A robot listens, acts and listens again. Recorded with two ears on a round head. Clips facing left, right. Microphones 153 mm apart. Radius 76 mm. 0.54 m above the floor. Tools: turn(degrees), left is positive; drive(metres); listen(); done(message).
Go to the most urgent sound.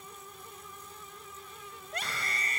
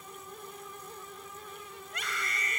turn(degrees=30)
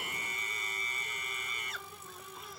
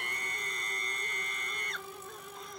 drive(metres=1.0)
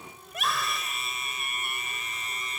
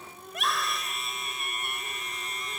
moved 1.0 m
drive(metres=1.0)
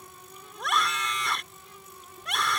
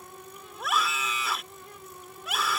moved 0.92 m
drive(metres=1.0)
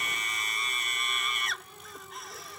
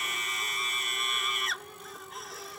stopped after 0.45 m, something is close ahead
done("I am next to the scream.")